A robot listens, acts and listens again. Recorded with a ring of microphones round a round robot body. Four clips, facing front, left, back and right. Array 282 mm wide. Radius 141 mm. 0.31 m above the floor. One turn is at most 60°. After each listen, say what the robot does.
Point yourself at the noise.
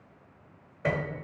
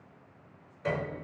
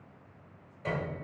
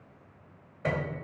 Turn 30° right.
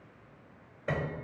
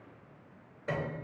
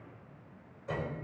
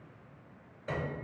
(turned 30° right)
Turn 10° left.
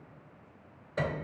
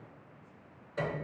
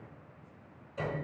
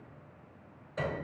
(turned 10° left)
Found it: a piano, straight ahead.